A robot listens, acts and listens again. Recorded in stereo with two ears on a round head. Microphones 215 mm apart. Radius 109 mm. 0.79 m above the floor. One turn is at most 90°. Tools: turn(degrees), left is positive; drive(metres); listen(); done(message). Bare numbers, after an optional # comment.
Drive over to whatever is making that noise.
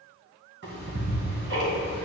# The ticking: about 50° right or 130° right.
turn(-50)
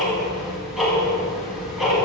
drive(1.0)
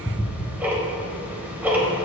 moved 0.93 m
drive(1.0)
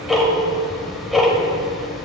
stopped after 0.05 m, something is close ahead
done("I am next to the ticking.")